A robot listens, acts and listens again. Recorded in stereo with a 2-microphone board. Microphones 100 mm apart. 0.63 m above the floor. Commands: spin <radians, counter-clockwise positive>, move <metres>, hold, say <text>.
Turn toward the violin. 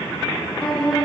spin 0.52
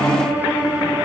spin -0.35
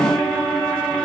say Facing the violin, 1 to 2 m away.